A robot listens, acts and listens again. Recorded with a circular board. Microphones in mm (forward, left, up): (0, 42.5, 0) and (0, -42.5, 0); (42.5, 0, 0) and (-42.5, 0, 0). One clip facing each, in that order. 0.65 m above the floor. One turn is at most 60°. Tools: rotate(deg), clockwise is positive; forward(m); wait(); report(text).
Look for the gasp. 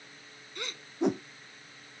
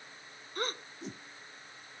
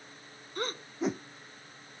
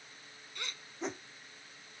rotate(45)
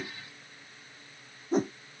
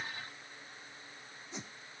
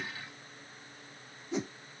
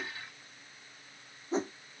report("Facing where the gasp came from. I can't hear it now.")